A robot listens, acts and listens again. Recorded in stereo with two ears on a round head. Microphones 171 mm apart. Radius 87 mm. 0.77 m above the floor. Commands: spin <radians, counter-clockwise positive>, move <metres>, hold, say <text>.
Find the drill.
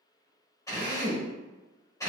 spin 0.35
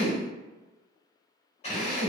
spin 2.53
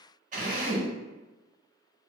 spin -0.70
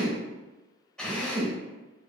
say Found it: a drill, straight ahead.